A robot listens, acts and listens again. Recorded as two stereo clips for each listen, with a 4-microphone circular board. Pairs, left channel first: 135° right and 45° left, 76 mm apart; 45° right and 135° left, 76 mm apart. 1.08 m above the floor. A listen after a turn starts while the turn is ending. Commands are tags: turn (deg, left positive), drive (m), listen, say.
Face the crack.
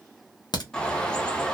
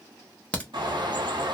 <turn deg="-120"/>
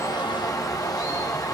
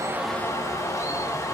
<say>I heard a crack from this way, but can't make it out now.</say>